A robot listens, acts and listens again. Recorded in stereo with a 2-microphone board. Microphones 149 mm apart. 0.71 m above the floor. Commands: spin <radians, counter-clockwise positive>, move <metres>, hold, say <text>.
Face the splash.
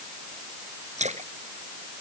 spin -0.87
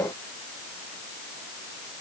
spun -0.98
hold
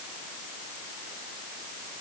say I heard a splash, but can't make it out now. It was about 5° left or 75° right.